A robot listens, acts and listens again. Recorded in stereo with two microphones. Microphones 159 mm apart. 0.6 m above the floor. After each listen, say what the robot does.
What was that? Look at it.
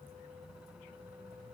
Keep listening.
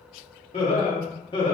Turn 30° left.
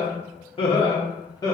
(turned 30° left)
Turn 25° left.
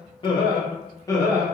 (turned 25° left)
Turn 20° left.
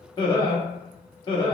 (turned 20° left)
Turn 30° left.
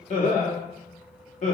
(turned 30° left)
Turn 130° left.
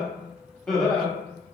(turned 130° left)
Facing the laughter.